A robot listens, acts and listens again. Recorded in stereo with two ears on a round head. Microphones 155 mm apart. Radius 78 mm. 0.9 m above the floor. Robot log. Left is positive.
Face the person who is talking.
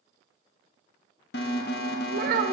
note: The child speaking: about 55° right or 125° right.
cmd yaw -55
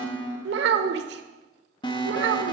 note: So it is at 70° right.
cmd yaw -70
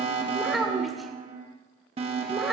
end: Facing the child speaking, 1 to 2 m away.